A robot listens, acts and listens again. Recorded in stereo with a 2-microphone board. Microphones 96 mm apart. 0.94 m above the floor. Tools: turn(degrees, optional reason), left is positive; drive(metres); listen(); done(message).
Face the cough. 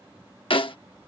listen()
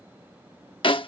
listen()
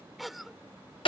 turn(degrees=30)
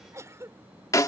turn(degrees=-30, reason="So it is at 30° right.")
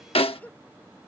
turn(degrees=15, reason="The cough is now 15° left.")
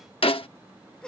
done("Found it: a cough, straight ahead.")